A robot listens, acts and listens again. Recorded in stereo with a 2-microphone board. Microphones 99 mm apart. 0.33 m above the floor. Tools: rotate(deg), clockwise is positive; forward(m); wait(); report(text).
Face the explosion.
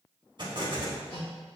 rotate(50)
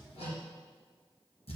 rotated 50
wait()
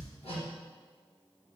report("I heard an explosion, but can't make it out now. It was about straight ahead or 80° right.")